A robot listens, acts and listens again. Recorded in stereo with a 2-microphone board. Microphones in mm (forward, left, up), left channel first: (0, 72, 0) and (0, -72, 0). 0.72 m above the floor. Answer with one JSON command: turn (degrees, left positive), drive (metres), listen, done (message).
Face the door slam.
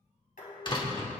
{"turn": 35}
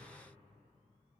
{"listen": true}
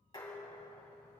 {"done": "I heard a door slam, but can't make it out now. It was about straight ahead or 110° left."}